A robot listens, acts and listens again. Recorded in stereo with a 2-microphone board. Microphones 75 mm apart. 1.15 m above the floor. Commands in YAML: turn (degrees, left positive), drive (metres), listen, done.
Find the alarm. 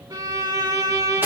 listen: true
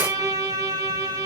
listen: true
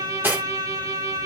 done: "I can't make out an alarm, only cutlery clinking and a violin."